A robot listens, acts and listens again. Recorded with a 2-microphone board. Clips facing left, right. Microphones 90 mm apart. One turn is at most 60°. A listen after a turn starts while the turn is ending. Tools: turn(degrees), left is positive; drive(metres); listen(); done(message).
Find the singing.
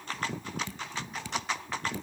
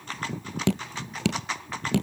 listen()
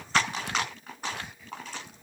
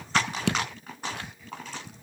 listen()
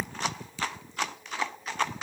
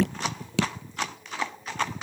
done("I can't make out singing to turn to.")